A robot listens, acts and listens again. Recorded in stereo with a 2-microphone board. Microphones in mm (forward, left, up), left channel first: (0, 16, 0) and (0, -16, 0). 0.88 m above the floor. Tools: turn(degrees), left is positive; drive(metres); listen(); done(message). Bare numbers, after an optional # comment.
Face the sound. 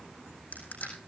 # The crushing: about 60° left or 120° left.
turn(60)
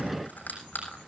# So it is at 65° left.
turn(65)
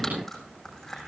# The crushing is now 10° left.
turn(10)
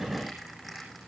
done("Found it: crushing, straight ahead.")